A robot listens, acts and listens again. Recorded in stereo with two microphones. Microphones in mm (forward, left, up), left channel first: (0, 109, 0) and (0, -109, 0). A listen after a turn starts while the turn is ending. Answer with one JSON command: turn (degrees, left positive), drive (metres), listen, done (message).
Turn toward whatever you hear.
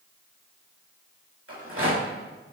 {"turn": -90}
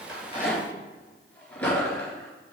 {"done": "Facing the rattle."}